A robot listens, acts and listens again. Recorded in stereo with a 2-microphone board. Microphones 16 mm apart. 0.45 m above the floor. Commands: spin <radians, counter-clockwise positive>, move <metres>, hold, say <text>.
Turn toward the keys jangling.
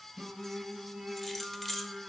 spin 0.52
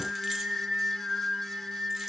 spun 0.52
hold
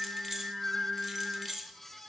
spin -0.35
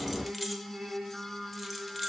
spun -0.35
hold
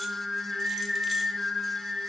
hold
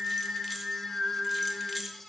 spin -0.17
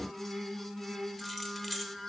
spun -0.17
say Found it: keys jangling, straight ahead, under 1 m away.